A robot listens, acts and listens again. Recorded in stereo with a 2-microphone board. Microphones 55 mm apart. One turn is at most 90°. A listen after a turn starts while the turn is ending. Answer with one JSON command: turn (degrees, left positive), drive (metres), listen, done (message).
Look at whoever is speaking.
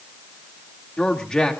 {"turn": 30}
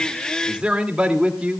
{"turn": -20}
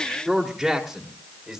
{"done": "Found it: a man speaking, straight ahead, 2 to 4 m away."}